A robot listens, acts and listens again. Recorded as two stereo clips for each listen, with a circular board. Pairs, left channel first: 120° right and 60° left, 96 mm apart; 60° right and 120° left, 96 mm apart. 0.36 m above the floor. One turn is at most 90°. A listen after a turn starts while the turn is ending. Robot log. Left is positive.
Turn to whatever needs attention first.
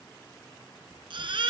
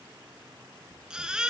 note: The baby crying: 40° left.
cmd yaw +40
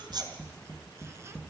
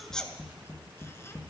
cmd idle
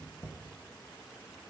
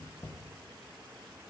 cmd idle
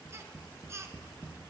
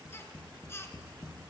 end: Found it: a baby crying, straight ahead, 1 to 2 m away.